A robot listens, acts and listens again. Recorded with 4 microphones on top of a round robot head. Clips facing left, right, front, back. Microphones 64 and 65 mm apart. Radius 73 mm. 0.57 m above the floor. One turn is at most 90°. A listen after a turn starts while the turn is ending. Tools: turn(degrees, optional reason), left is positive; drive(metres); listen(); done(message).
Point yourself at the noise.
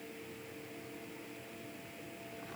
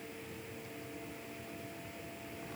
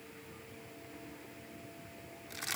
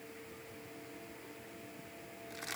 listen()
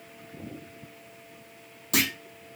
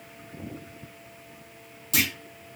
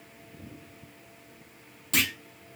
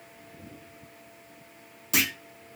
turn(degrees=90, reason="The clunk: 100° left.")
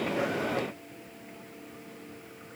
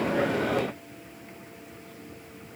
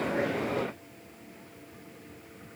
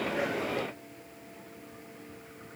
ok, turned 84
turn(degrees=20, reason="Nothing new. It was at 20° left.")
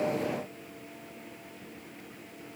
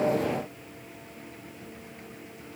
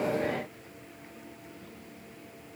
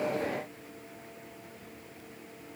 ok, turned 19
done("Facing where the clunk came from. I can't hear it now.")